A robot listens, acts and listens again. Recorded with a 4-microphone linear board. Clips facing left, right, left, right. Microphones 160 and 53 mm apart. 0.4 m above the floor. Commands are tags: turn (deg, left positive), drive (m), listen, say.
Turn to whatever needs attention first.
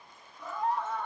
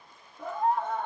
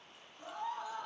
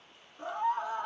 <turn deg="-55"/>
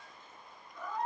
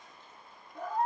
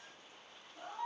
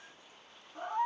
<turn deg="-50"/>
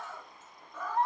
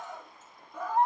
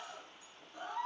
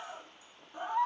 <turn deg="-20"/>
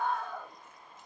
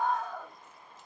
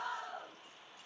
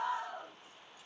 <say>Found it: a scream, straight ahead, 1 to 2 m away.</say>